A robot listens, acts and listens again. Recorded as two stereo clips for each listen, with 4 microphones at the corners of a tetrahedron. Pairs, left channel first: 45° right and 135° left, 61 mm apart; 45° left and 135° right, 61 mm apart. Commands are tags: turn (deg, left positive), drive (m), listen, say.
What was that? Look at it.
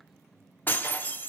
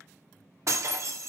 <turn deg="-100"/>
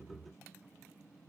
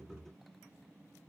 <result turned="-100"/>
<say>I heard breaking glass from this way, but can't make it out now.</say>